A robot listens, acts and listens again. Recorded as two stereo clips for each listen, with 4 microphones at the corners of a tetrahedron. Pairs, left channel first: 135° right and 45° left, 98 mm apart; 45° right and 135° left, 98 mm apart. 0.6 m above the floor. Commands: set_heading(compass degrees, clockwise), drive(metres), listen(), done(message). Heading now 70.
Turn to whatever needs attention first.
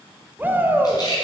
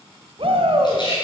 set_heading(315)
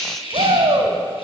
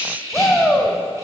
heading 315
set_heading(280)
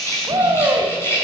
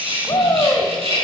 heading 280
done("Facing the shout.")